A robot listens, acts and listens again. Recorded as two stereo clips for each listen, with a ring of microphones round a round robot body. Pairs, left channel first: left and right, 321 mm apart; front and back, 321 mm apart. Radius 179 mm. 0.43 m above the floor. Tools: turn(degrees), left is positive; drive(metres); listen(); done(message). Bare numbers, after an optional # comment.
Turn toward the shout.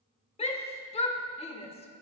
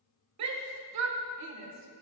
# The shout: 160° left.
turn(160)
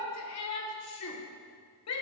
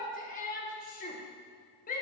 # The shout is now 60° left.
turn(60)
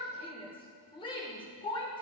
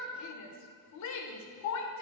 # The shout is now 15° left.
turn(15)
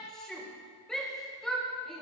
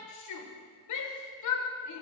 done("Facing the shout, 1 to 2 m away.")